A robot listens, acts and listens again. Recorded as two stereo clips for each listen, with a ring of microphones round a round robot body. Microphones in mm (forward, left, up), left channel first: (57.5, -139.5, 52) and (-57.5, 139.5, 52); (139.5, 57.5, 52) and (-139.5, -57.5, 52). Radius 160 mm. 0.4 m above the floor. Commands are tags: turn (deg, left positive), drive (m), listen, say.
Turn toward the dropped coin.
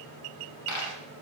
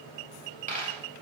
<turn deg="-90"/>
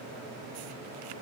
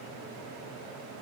<say>I heard a dropped coin from this way, but can't make it out now.</say>